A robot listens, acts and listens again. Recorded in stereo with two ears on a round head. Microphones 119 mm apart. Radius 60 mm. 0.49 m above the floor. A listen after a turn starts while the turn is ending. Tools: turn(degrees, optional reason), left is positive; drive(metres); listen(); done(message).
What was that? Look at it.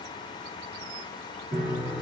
turn(degrees=-65, reason="The piano: about 65° right or 115° right.")
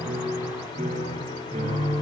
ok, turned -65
turn(degrees=-50, reason="So it is at 50° right.")
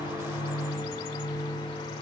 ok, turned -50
done("Found it: a piano, straight ahead, over 4 m away.")